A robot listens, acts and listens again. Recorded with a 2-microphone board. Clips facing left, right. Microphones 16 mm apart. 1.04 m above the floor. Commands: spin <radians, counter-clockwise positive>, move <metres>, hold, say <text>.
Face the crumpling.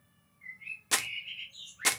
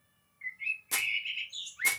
spin 0.79
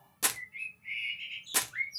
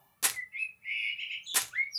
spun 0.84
say Found it: crumpling, straight ahead, under 1 m away.